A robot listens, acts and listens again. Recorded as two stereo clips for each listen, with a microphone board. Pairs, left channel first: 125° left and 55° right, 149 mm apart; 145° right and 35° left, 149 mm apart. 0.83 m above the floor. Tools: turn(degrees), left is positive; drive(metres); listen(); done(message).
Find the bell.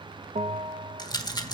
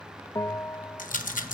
turn(degrees=-80)
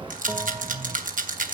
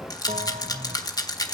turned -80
listen()
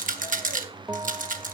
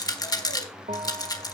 turn(degrees=10)
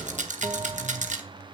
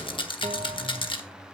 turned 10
listen()
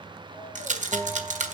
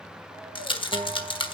done("Facing the bell, under 1 m away.")